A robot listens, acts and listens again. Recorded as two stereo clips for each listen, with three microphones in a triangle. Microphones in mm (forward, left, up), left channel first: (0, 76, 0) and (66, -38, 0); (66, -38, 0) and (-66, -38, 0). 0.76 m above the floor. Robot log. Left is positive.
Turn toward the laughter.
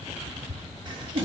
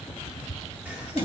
note: The laughter: 105° right.
cmd yaw -105
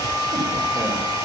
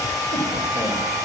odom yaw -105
cmd idle
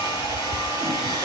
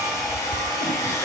cmd idle
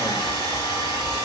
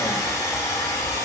end: Facing where the laughter came from. I can't hear it now.